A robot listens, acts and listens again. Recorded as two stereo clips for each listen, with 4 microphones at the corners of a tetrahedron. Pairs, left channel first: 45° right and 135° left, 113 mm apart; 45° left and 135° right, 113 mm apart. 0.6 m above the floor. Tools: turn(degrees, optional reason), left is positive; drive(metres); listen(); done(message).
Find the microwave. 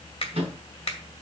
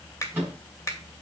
turn(degrees=155, reason="The microwave: 155° left.")
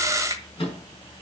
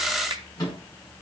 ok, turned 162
turn(degrees=-10, reason="The microwave is now 10° right.")
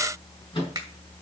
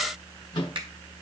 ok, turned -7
done("Found it: a microwave, straight ahead.")